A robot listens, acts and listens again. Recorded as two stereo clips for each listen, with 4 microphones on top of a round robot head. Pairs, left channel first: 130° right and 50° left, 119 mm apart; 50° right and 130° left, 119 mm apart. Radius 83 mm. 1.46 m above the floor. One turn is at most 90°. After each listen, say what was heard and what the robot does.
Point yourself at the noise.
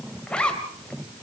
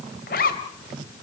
The zipper: 50° right. Turn 50° right.
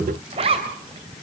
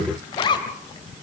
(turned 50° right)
Facing the zipper, 2 to 4 m away.